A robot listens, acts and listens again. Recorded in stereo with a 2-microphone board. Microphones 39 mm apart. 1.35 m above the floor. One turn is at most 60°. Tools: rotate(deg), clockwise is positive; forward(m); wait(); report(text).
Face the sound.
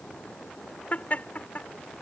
rotate(-40)
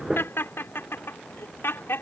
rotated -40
rotate(-60)
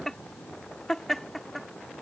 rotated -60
report("Facing the laughter.")